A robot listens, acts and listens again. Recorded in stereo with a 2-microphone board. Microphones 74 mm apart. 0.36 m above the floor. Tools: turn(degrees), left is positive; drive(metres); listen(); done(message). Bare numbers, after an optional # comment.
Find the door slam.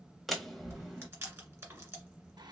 turn(30)
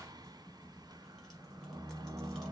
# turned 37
listen()
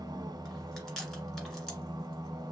done("I heard a door slam, but can't make it out now. It was about 35° right or 140° left.")